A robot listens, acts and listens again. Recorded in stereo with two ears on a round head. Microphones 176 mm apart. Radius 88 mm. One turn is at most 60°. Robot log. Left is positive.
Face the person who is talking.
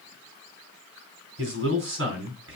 note: The man speaking: about 65° right or 115° right.
cmd yaw -60
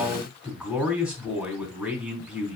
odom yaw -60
end: Facing the man speaking.